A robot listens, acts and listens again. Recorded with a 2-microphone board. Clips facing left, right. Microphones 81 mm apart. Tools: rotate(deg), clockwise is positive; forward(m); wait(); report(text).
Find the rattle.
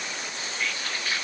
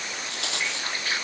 rotate(90)
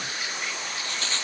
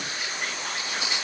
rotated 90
rotate(10)
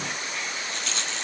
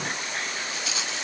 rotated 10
report("Found it: a rattle, straight ahead.")